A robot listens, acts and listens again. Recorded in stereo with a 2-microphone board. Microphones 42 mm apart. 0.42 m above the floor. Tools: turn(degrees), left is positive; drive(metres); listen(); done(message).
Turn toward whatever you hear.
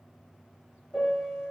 turn(degrees=20)
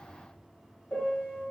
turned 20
turn(degrees=140)
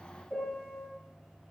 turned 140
turn(degrees=15)
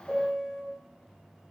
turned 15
done("Found it: a piano, straight ahead.")